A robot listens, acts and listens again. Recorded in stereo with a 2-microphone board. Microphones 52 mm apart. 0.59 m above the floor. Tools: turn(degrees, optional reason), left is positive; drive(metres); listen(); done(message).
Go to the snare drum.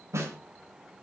turn(degrees=-65, reason="The snare drum: about 65° right or 115° right.")
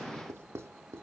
listen()
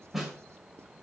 drive(metres=1.0)
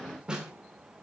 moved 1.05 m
turn(degrees=-15, reason="The snare drum is now 15° right.")
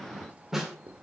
drive(metres=1.0)
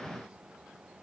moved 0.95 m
listen()
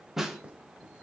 turn(degrees=-10, reason="The snare drum is now 10° right.")
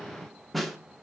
drive(metres=1.0)
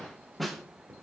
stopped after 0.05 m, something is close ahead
done("Arrived at the snare drum, straight ahead.")